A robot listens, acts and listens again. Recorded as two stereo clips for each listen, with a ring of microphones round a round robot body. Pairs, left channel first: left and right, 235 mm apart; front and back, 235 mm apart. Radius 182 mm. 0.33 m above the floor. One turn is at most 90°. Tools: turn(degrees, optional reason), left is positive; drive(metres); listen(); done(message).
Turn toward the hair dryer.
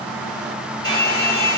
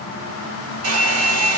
turn(degrees=90, reason="The hair dryer: 165° left.")
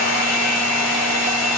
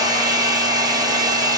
turn(degrees=90, reason="The hair dryer is now 105° left.")
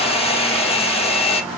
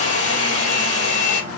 turn(degrees=25, reason="The hair dryer is now 25° left.")
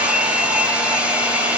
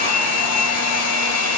done("Facing the hair dryer, 2 to 4 m away.")